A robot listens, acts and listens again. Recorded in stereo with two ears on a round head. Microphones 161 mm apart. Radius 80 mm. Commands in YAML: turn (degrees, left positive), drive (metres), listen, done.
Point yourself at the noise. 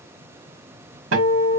turn: -90
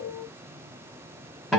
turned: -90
done: "Found it: a guitar, straight ahead, 1 to 2 m away."